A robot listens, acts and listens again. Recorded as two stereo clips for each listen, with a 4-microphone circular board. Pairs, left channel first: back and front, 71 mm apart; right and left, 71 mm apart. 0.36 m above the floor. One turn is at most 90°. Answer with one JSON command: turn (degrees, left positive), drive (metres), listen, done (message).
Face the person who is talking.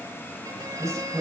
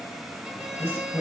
{"turn": -40}
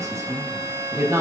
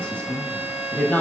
{"turn": -25}
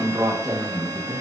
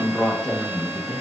{"turn": -15}
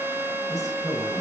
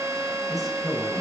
{"done": "Facing the woman speaking."}